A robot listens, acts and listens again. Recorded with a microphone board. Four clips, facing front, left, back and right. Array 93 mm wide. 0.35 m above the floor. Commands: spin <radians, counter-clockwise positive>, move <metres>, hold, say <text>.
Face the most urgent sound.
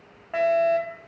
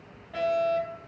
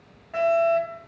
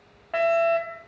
spin -1.05
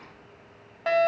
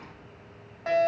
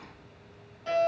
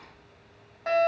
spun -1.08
say Facing the fire alarm.